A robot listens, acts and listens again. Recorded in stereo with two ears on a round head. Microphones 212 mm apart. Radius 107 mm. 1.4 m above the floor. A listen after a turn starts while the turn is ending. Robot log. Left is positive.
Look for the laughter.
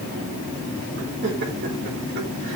note: The laughter: about 45° right or 135° right.
cmd yaw -45
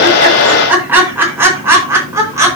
note: So it is at 15° right.
cmd yaw -15
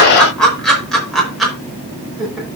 end: Found it: laughter, straight ahead.